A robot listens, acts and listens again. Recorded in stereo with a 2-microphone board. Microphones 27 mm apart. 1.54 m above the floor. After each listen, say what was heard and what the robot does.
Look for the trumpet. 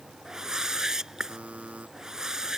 Keep listening.
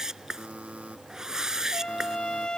The trumpet: about 30° left or 150° left. Turn 30° left.
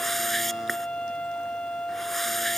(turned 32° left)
So it is at 110° left. Turn 110° left.
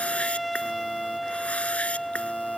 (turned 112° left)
Found it: a trumpet, straight ahead.